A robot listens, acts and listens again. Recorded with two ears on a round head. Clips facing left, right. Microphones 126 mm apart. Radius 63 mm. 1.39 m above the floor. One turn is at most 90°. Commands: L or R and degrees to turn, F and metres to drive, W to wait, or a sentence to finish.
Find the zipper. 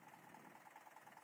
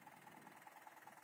W
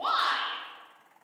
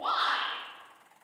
W
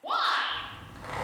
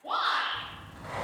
L65
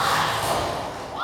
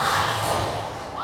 Found it: a zipper, straight ahead, 1 to 2 m away.